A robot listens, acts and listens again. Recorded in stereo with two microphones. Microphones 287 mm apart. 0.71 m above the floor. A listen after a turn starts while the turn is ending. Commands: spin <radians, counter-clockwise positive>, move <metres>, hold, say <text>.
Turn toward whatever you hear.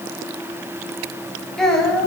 spin 0.52
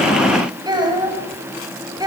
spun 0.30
spin -0.52
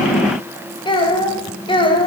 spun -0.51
spin 0.35
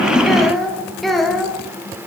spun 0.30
say Found it: a child speaking, straight ahead, 2 to 4 m away.